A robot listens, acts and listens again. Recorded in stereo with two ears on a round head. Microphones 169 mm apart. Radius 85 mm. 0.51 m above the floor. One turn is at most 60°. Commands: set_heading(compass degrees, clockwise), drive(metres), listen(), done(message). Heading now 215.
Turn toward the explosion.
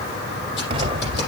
set_heading(245)
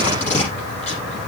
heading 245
listen()
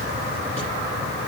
done("I heard an explosion, but can't make it out now. It was about straight ahead or 120° right.")